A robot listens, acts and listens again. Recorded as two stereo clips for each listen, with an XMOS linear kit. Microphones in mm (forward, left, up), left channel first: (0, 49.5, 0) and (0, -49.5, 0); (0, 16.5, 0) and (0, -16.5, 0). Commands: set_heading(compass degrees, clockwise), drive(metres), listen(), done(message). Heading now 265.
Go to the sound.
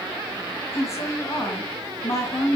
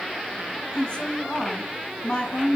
set_heading(235)
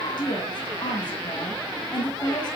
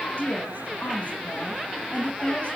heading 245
set_heading(120)
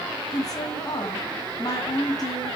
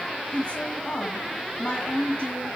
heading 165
set_heading(120)
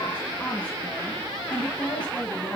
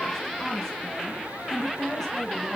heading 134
set_heading(119)
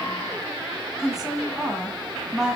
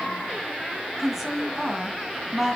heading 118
drive(1.0)
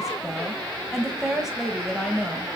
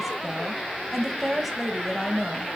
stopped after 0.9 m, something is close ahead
done("I am next to the woman speaking.")